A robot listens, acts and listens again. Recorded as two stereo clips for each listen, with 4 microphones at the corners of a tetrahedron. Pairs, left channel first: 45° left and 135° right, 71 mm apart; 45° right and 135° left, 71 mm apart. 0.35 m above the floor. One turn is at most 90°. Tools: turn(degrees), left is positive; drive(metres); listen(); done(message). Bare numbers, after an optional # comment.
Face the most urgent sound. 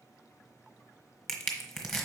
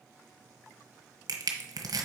listen()
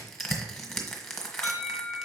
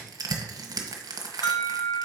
# The alarm: 40° right.
turn(-40)
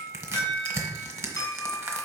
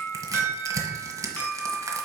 done("Found it: an alarm, straight ahead.")